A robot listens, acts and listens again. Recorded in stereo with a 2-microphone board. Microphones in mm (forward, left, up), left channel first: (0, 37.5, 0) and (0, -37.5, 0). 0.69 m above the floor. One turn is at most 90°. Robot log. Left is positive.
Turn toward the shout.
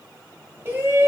note: The shout: about 30° right or 150° right.
cmd yaw -30
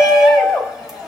end: Found it: a shout, straight ahead.